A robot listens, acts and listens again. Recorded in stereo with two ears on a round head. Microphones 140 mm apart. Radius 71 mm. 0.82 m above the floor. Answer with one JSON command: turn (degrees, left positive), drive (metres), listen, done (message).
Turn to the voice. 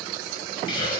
{"listen": true}
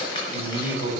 {"turn": -30}
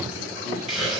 {"listen": true}
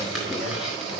{"listen": true}
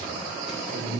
{"turn": -115}
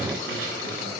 {"listen": true}
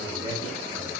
{"turn": -25}
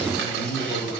{"done": "Facing the man speaking."}